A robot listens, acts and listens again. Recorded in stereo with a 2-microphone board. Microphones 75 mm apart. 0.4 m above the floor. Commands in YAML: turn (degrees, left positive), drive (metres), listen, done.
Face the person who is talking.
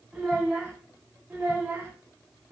turn: -25
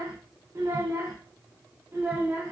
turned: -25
turn: -25
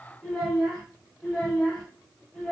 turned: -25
turn: 10
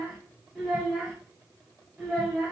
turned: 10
done: "Facing the child speaking, 1 to 2 m away."